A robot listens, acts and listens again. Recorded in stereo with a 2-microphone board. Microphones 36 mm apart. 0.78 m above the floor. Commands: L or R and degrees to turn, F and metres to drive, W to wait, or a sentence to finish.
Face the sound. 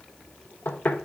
L65
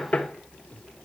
L45
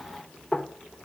L15
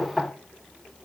Facing the knocking.